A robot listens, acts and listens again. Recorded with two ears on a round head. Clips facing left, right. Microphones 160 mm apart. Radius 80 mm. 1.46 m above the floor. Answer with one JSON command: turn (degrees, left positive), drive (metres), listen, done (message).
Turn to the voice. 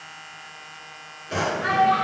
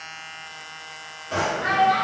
{"turn": 45}
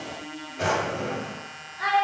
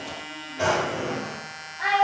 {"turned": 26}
{"turn": 105}
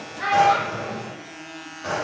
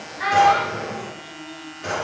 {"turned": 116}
{"turn": -15}
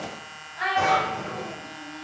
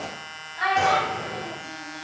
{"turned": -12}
{"done": "Found it: a child speaking, straight ahead."}